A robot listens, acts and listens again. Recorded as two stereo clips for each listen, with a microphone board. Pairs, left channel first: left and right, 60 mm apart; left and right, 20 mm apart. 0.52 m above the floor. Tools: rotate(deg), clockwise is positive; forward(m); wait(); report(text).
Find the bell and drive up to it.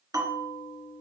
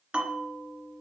rotate(90)
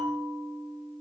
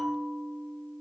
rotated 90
forward(1.0)
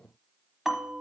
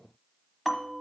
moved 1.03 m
forward(1.0)
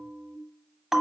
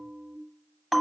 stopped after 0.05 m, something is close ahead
report("I am next to the bell.")